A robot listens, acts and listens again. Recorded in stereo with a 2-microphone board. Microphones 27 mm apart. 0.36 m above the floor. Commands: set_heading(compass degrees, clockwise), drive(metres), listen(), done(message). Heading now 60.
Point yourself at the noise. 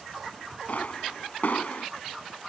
set_heading(355)
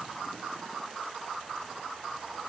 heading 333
listen()
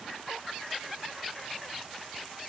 done("I heard a pop, but can't make it out now. It was about 25° right or 30° left.")